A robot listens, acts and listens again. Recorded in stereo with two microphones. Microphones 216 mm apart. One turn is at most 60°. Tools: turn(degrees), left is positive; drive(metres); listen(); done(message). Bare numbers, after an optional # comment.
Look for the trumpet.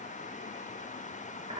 listen()
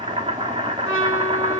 turn(60)
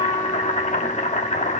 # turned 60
# Nothing new. It was at 30° left.
turn(30)
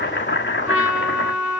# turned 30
done("Facing the trumpet, over 4 m away.")